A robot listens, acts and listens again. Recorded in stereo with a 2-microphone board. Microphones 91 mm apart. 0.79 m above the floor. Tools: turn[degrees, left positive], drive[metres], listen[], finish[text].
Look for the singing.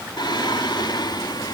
Thought: The singing: about 50° left or 130° left.
Action: turn[50]
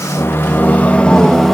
Action: finish[Found it: singing, straight ahead.]